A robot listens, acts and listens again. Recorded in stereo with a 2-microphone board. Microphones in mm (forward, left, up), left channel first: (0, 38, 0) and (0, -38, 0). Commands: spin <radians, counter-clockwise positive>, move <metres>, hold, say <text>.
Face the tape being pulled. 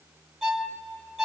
hold
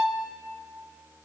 hold
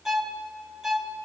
say I can't make out tape being pulled to turn to.